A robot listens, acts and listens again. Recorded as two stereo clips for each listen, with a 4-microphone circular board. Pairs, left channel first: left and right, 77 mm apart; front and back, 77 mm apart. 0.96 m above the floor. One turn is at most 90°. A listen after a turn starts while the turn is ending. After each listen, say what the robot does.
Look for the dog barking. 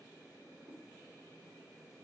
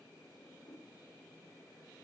Keep listening.
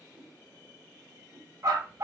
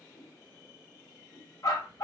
Turn 40° right.
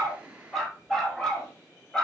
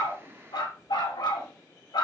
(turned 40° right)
Turn 10° left.
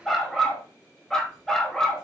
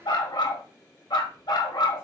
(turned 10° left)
Found it: a dog barking, straight ahead.